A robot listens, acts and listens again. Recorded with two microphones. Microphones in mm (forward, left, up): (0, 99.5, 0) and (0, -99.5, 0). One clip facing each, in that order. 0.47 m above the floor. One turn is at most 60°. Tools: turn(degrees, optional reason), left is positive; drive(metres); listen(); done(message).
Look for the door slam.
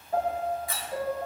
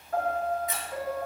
turn(degrees=-20, reason="The door slam: about 20° right or 160° right.")
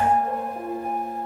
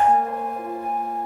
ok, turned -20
listen()
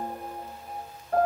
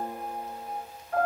done("I heard a door slam, but can't make it out now. It was about straight ahead or 140° right.")